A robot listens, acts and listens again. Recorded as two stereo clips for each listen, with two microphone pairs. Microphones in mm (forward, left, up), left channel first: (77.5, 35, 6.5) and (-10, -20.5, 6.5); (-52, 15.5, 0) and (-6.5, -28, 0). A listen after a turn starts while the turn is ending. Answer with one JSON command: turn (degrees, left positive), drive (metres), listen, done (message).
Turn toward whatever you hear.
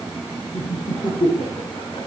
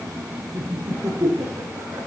{"turn": -10}
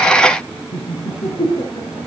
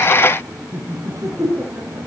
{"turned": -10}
{"done": "Facing the laughter, over 4 m away."}